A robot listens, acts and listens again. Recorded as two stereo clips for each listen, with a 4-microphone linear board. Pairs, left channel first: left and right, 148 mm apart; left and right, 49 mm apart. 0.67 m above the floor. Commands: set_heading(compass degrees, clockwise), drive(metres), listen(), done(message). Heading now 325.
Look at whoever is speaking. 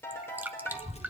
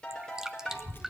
set_heading(280)
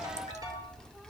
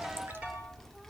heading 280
done("Facing the child speaking, 1 to 2 m away.")